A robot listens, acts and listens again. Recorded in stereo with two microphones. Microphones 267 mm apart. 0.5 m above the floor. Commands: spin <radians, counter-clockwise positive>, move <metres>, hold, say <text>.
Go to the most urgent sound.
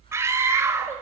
spin -0.52
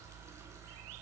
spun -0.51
hold
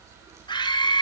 spin 0.35
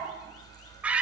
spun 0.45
move 1.0
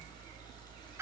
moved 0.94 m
hold
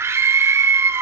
spin -0.26
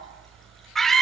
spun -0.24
move 1.0
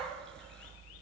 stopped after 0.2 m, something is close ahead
hold
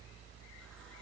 hold
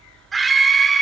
say I am next to the scream.